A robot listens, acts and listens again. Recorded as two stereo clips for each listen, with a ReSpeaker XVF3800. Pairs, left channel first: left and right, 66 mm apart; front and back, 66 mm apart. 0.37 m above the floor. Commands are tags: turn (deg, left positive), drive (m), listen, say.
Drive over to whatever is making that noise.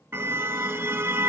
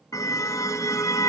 <turn deg="-30"/>
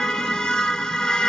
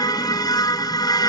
<turn deg="15"/>
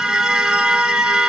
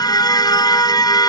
<drive m="1.0"/>
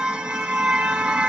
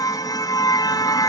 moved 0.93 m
<turn deg="-10"/>
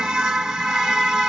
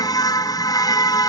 <drive m="1.0"/>
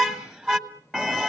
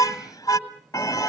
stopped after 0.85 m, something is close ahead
<say>Arrived at the car horn, straight ahead.</say>